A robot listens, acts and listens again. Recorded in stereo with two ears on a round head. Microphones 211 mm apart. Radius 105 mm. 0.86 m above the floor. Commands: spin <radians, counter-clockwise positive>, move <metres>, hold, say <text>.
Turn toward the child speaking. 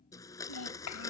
spin 1.57
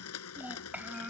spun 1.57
spin -0.17
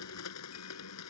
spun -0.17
hold
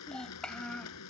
say Facing the child speaking.